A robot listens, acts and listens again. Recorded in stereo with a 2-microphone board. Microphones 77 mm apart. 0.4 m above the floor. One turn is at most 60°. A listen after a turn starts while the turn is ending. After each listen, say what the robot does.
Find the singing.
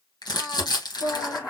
Turn 60° left.
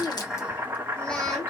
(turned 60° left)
Keep listening.
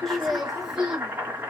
Turn 10° right.
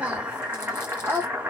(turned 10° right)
Turn 30° right.
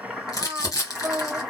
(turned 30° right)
Turn 20° right.
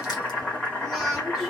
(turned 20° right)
Keep listening.
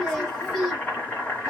Facing the singing.